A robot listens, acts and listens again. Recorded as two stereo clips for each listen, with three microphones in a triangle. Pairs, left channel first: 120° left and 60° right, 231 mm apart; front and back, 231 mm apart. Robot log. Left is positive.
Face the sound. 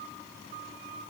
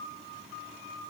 cmd idle
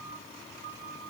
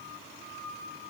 cmd idle
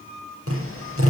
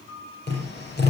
note: The tapping: 45° right.
cmd yaw -45
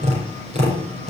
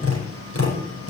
end: Found it: tapping, straight ahead.